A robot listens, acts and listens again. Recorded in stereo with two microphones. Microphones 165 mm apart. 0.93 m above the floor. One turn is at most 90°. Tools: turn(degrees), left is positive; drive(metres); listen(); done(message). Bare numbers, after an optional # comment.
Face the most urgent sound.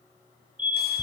# The fire alarm: about 55° right or 125° right.
turn(-55)
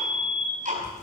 # So it is at 10° right.
turn(-10)
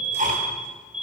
done("Facing the fire alarm.")